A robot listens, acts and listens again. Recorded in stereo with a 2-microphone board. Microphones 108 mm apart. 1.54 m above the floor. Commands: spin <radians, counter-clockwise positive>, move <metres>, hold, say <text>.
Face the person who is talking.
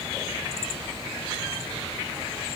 hold
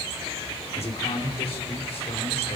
spin 1.22
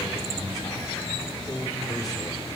spin 0.61
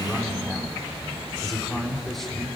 say Found it: a man speaking, straight ahead, over 4 m away.